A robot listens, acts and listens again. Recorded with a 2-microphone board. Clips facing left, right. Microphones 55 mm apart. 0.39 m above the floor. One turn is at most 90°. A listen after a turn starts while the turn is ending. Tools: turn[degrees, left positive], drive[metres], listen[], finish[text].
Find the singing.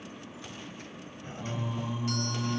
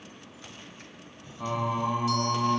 Thought: The singing: about 65° right or 115° right.
Action: turn[-65]
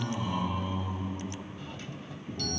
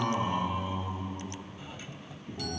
Thought: So it is at 15° right.
Action: turn[-15]
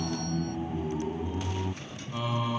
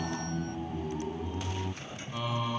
Action: finish[Facing the singing.]